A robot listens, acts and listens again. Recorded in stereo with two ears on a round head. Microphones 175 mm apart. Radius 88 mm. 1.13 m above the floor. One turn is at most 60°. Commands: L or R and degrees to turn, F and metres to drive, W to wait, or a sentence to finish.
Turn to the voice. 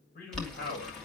L50
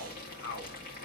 L60
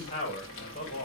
L35
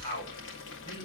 L25
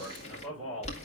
R10
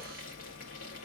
W
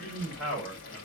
Found it: a man speaking, straight ahead.